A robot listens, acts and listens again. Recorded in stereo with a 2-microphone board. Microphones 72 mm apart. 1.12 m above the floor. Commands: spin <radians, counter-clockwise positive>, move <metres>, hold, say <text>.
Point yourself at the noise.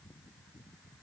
hold
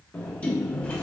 spin 0.35
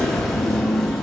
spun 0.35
say Facing the sliding door.